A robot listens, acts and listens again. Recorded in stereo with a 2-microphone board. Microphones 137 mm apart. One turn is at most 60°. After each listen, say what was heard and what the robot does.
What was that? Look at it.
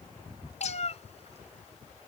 The cat meowing: about 55° left or 125° left. Turn 55° left.
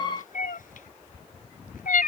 So it is at 85° left. Turn 60° left.
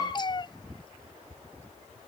The cat meowing is now 35° left. Turn 35° left.
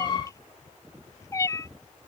The cat meowing is now 25° left. Turn 25° left.
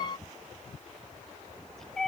Facing the cat meowing.